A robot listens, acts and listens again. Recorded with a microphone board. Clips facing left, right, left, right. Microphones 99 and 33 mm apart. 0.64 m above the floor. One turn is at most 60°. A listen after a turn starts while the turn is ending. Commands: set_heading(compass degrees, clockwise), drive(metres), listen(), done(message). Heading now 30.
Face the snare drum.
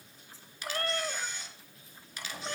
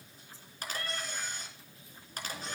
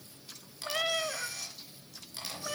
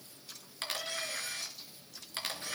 listen()
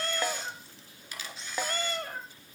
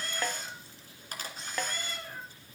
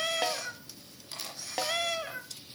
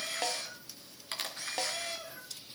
set_heading(0)
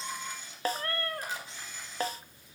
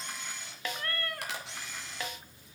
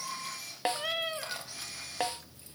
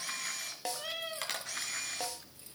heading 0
set_heading(300)
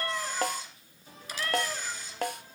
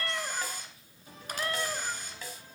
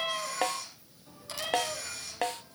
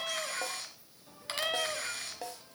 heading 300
set_heading(240)
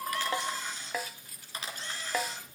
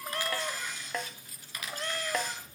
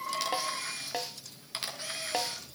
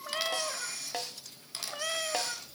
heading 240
done("Facing the snare drum, under 1 m away.")